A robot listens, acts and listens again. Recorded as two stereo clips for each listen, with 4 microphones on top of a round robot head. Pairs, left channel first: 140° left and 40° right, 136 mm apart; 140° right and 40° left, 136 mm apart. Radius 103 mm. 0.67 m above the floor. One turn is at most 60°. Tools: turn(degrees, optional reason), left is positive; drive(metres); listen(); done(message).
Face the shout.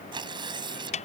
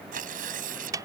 listen()
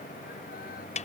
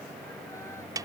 listen()
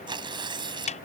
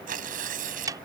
done("I can't make out a shout to turn to.")